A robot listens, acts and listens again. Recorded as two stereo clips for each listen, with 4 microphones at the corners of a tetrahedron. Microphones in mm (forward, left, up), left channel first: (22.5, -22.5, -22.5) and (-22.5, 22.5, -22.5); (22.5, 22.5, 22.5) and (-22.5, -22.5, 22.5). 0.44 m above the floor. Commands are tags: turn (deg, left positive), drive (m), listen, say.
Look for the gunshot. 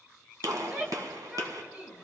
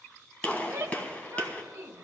<turn deg="115"/>
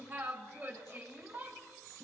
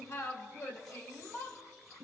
<say>Facing where the gunshot came from. I can't hear it now.</say>